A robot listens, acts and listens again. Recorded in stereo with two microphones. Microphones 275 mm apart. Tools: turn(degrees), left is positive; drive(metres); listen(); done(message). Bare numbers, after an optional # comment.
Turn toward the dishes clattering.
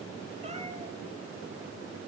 listen()
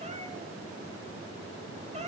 listen()
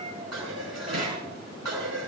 # The dishes clattering: about 70° right or 110° right.
turn(-70)
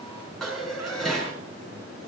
done("Facing the dishes clattering.")